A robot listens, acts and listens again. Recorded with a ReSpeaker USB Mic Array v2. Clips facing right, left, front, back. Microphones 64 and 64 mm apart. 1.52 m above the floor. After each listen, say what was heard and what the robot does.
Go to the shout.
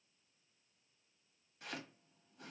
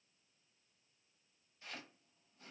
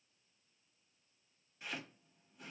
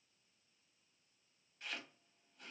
Keep listening.
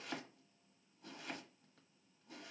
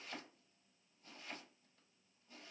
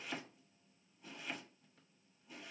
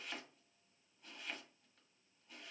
Keep listening.
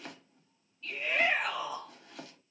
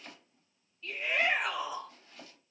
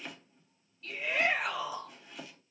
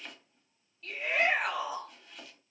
The shout: 175° left. Turn 175° left.
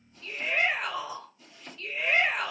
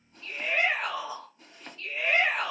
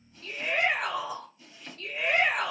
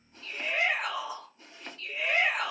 The shout is now 35° left. Turn 35° left.
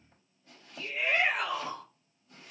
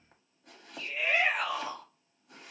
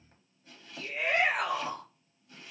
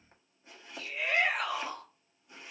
The shout is now 15° left. Turn 15° left.
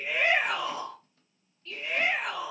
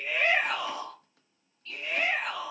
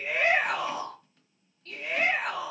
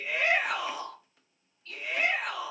Drive 1.0 m forward.
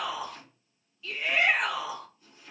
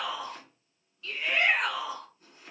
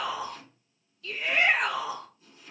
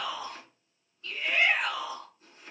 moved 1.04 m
Drive 1.0 m forward.
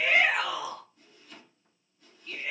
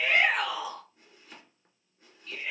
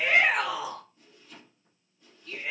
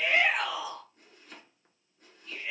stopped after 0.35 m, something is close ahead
The shout is now 10° right. Turn 10° right.
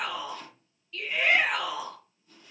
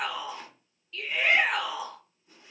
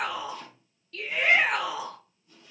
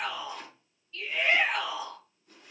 I am next to the shout.